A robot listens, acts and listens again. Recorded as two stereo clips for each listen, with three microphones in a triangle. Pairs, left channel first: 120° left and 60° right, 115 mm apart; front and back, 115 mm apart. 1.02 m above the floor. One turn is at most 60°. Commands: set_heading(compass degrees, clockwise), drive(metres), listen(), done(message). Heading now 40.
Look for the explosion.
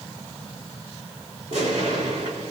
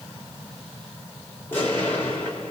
set_heading(100)
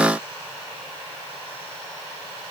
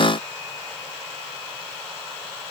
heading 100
set_heading(110)
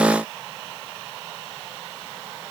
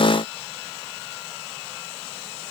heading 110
done("Facing where the explosion came from. I can't hear it now.")